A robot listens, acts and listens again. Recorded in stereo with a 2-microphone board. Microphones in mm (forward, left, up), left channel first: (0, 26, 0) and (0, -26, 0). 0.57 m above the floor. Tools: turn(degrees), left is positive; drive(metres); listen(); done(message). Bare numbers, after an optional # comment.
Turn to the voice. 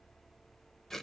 listen()
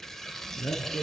# The man speaking: about 65° left or 115° left.
turn(65)
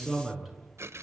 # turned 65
done("Found it: a man speaking, straight ahead.")